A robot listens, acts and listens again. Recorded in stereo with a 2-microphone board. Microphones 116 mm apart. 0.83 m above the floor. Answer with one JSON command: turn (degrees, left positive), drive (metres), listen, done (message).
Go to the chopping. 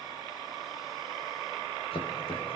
{"turn": 55}
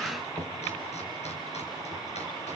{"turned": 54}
{"turn": 70}
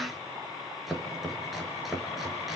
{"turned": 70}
{"drive": 1.0}
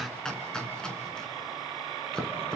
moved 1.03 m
{"drive": 1.0}
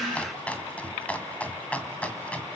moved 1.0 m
{"turn": 10}
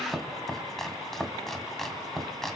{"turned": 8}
{"drive": 1.0}
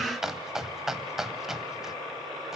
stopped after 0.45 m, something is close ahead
{"done": "Arrived at the chopping, straight ahead."}